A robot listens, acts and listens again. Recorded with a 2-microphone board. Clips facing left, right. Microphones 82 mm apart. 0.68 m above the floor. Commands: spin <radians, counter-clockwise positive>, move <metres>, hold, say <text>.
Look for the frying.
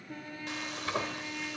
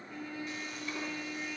spin 1.57
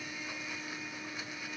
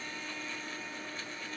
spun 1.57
hold
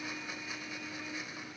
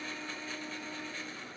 hold
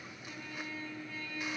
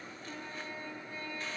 say I heard frying from this way, but can't make it out now.